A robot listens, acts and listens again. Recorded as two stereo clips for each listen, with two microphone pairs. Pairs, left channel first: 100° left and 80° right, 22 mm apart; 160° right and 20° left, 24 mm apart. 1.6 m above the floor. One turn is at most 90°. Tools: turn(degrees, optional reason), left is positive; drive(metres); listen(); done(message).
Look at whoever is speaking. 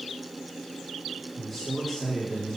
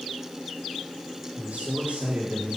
turn(degrees=25, reason="The man speaking: 25° left.")
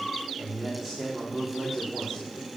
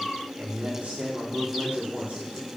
turn(degrees=10, reason="The man speaking is now 10° left.")
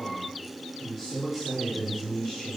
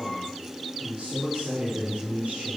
done("Facing the man speaking, over 4 m away.")